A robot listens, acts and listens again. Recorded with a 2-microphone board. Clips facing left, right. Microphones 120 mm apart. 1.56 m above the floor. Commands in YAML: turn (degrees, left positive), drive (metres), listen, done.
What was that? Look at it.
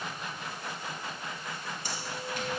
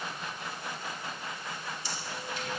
turn: 50
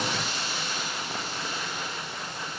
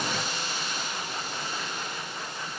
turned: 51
turn: 75
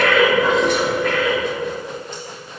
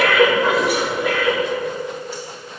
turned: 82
turn: -10
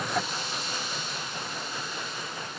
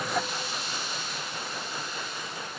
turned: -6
done: "Found it: breathing, straight ahead, 2 to 4 m away."